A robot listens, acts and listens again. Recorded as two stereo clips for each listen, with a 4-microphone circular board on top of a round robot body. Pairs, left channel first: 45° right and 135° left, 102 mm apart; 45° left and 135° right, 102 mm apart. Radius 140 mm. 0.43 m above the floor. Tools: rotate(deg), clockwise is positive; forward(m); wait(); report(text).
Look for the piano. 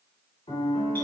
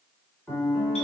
rotate(45)
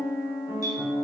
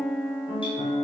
report("Facing the piano.")